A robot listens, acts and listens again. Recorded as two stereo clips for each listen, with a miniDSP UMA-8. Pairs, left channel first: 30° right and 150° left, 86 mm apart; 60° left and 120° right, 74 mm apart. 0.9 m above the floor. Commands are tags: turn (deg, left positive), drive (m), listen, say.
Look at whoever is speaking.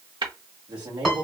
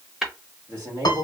<turn deg="-170"/>
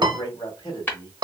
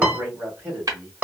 <turn deg="-60"/>
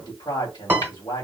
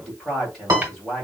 <turn deg="-25"/>
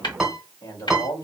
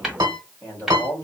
<say>Found it: a man speaking, straight ahead, 1 to 2 m away.</say>